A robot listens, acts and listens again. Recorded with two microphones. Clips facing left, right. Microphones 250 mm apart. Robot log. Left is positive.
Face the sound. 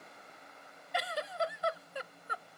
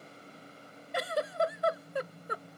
note: The giggle: about 55° right or 125° right.
cmd yaw -55
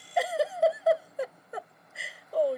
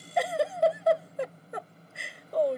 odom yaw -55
end: Facing the giggle.